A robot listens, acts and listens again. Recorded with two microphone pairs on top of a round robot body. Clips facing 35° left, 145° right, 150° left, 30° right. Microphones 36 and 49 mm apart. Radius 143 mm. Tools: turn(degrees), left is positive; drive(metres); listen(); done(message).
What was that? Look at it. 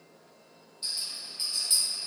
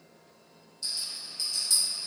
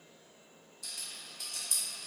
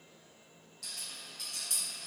turn(degrees=-30)
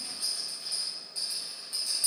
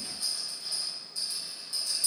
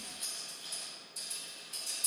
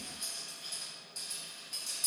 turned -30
done("Found it: a rattle, straight ahead, 1 to 2 m away.")